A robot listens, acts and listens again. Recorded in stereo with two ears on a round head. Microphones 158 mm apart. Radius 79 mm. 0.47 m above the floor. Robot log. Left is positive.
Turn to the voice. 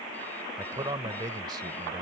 note: The man speaking: about 25° right or 155° right.
cmd yaw -25
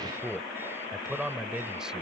end: Found it: a man speaking, straight ahead.